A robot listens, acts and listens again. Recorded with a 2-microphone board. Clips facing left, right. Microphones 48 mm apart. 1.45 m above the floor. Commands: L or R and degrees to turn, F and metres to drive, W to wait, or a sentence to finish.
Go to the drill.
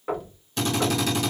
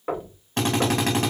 R50
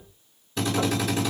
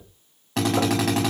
R85
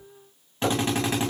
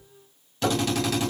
L25
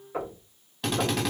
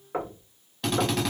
F1.0
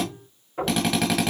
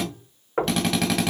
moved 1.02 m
F1.0
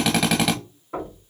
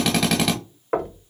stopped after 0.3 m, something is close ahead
Arrived at the drill, straight ahead.